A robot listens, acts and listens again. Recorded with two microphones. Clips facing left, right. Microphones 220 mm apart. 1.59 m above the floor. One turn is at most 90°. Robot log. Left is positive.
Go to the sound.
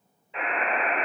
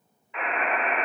note: The buzzer: about 30° left or 150° left.
cmd yaw +30
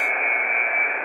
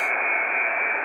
note: So it is at 120° left.
cmd yaw +90
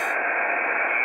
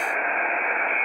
note: The buzzer is now 55° left.
cmd yaw +55
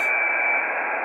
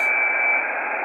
note: The buzzer is now 15° left.
cmd yaw +15
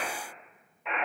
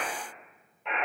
cmd fwd 1.0
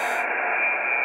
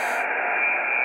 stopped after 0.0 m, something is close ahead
end: Blocked. The buzzer is further on, straight ahead.